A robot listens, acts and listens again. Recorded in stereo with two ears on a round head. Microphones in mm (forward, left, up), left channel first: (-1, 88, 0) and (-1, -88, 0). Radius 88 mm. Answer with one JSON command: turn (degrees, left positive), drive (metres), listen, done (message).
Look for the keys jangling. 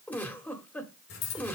{"turn": 70}
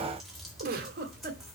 {"done": "Found it: keys jangling, straight ahead."}